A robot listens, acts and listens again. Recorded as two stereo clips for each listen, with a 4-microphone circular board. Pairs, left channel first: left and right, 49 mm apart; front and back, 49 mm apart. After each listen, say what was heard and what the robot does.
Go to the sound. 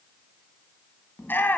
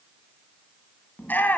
The shout: 45° left. Turn 45° left.
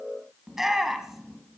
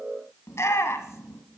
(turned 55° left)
The shout is now 10° right. Turn 10° right.
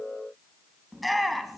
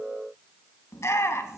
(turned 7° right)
Drive 1.0 m forward.
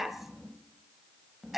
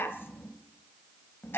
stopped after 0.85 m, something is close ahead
I am next to the shout.